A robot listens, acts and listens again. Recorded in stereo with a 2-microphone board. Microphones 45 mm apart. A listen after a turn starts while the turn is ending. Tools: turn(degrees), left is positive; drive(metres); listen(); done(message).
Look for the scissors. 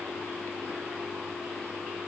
listen()
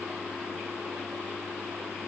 listen()
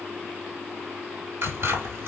turn(degrees=-60)
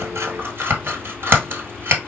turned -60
turn(degrees=-60)
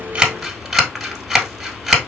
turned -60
done("Found it: scissors, straight ahead.")